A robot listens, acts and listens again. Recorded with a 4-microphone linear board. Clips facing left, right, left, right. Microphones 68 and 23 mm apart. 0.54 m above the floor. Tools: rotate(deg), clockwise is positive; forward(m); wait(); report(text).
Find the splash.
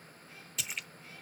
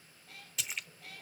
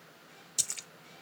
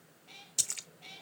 rotate(-30)
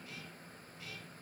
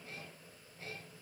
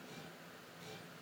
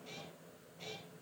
wait()
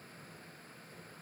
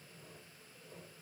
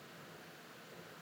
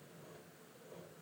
report("I heard a splash, but can't make it out now. It was about 30° right or 150° left.")